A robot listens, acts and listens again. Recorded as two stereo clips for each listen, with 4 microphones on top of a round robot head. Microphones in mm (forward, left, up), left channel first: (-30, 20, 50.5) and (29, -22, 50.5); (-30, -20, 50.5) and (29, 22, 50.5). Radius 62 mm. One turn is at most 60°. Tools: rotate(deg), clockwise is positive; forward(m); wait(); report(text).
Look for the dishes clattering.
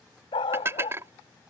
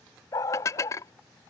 rotate(60)
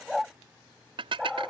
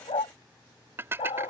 rotate(25)
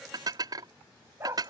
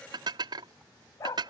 report("Facing the dishes clattering.")